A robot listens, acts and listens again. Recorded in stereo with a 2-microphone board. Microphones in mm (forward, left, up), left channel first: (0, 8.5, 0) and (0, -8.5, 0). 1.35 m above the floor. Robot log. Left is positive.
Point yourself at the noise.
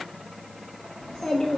cmd yaw +90
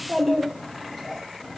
note: So it is at 15° left.
cmd yaw +15
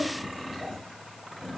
note: The child speaking is now 20° left.
cmd yaw +20
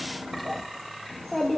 note: The child speaking is now 20° left.
cmd yaw +20
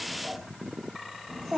end: Facing the child speaking, 1 to 2 m away.